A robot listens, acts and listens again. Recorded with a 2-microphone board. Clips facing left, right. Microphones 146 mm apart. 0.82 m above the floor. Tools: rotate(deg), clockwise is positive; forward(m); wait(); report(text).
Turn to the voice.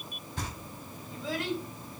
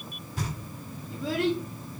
rotate(65)
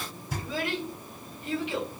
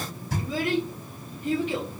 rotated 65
rotate(45)
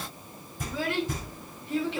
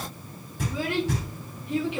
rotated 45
rotate(15)
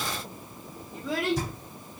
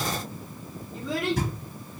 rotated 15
report("Found it: a child speaking, straight ahead, 1 to 2 m away.")